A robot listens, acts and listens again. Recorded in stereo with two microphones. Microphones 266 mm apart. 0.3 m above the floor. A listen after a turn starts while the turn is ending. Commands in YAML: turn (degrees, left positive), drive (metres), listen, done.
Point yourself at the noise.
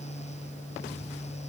listen: true
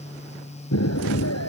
turn: 90
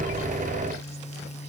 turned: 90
done: "Facing where the explosion came from. I can't hear it now."